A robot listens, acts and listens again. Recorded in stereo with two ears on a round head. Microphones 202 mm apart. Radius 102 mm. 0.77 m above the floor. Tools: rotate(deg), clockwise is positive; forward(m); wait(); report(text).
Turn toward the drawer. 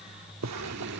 rotate(90)
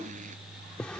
report("Facing the drawer.")